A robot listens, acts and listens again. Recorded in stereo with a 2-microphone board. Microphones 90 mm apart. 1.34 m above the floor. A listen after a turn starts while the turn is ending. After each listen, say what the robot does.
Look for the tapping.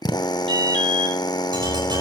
Turn 55° right.
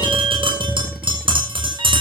Turn 70° right.
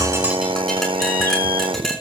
Found it: tapping, straight ahead, over 4 m away.